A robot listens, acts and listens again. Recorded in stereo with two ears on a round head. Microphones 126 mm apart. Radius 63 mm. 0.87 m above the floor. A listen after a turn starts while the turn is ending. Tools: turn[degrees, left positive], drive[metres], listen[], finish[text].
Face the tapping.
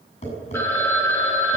Thought: The tapping: about 45° left or 135° left.
Action: turn[45]
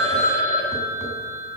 Action: listen[]
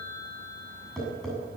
Action: finish[Facing the tapping.]